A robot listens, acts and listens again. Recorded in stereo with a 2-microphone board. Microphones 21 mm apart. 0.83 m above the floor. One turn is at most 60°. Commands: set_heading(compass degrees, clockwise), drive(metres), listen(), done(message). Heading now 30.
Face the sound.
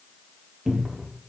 set_heading(60)
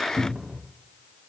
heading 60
set_heading(120)
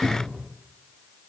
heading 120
set_heading(180)
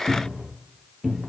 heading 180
set_heading(200)
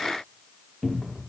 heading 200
done("Facing the cupboard door.")